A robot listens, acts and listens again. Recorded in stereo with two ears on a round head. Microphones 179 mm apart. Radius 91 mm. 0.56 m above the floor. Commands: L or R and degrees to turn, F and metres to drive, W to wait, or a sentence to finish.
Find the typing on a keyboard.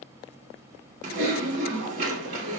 R40
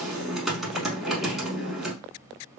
Found it: typing on a keyboard, straight ahead.